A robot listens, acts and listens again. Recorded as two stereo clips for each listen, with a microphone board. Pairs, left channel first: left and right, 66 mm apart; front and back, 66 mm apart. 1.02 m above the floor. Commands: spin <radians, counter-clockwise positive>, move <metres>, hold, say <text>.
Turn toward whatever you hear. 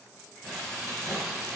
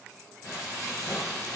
say Found it: frying, straight ahead, 1 to 2 m away.